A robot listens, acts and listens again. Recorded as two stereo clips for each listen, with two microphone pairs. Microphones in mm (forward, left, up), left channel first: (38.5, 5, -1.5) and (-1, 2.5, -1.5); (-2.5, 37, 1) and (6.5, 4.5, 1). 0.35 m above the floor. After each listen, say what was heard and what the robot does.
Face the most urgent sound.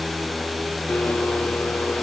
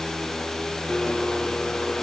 Keep listening.
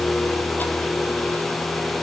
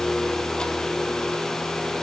Keep listening.
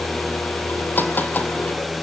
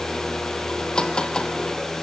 I can't make out anything urgent, only a blender.